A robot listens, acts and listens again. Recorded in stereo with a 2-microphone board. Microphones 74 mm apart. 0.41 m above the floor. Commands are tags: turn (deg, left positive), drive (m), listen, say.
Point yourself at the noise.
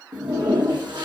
<turn deg="-90"/>
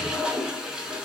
<turn deg="-10"/>
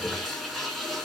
<say>Found it: a toilet flushing, straight ahead.</say>